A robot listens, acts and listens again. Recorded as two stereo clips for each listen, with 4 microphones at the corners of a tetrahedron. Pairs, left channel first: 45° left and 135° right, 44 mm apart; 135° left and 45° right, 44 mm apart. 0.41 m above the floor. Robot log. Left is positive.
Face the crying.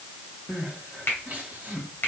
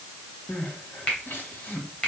note: The crying: 170° left.
cmd yaw +170
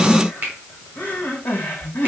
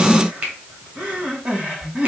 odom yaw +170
note: The crying is now 10° left.
cmd yaw +10
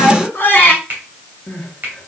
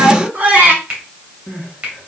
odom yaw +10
end: Facing the crying, 1 to 2 m away.